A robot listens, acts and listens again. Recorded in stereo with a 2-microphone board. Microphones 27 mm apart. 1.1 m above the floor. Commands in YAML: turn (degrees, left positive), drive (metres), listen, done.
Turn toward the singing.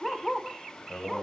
turn: 70
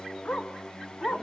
turn: 35
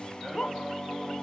done: "Found it: singing, straight ahead, over 4 m away."